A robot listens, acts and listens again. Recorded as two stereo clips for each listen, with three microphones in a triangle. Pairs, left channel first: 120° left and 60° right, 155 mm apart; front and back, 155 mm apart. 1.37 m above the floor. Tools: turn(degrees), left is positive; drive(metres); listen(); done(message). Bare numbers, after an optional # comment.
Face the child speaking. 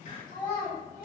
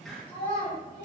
# The child speaking: 55° left.
turn(55)
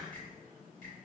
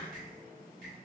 listen()
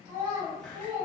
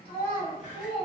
done("Found it: a child speaking, straight ahead.")